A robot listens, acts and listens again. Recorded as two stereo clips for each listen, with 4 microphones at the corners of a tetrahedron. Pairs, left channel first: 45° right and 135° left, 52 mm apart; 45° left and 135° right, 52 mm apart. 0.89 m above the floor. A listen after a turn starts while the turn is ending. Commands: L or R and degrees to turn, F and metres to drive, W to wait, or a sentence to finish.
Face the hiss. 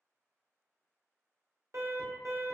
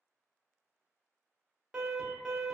W
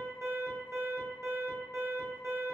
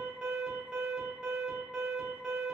W
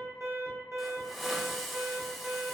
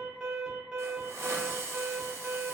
R135
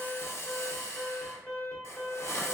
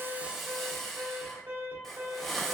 R40
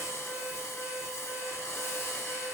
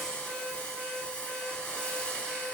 R20
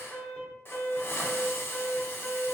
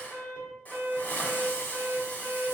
R10
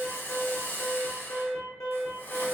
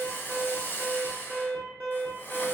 Facing the hiss, under 1 m away.